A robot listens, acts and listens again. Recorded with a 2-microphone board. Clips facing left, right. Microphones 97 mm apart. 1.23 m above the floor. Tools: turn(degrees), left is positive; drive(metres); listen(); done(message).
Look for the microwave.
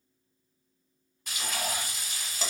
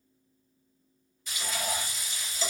listen()
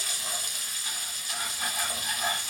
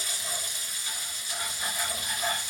listen()
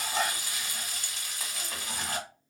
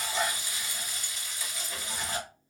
done("I can't make out a microwave, only frying.")